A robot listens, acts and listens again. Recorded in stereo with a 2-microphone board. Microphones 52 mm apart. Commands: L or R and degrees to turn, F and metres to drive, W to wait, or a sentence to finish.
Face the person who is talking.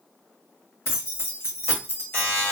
W
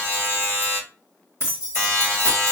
W
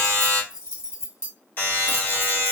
I can't make out anyone speaking to turn to.